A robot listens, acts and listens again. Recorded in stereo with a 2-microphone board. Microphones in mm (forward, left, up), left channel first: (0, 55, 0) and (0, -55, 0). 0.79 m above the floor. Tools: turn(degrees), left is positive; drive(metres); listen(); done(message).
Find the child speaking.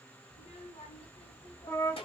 turn(degrees=55)
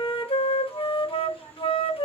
turn(degrees=85)
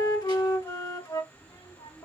turn(degrees=45)
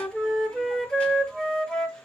listen()
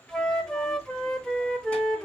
listen()
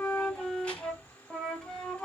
turn(degrees=10)
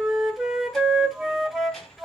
done("Facing the child speaking.")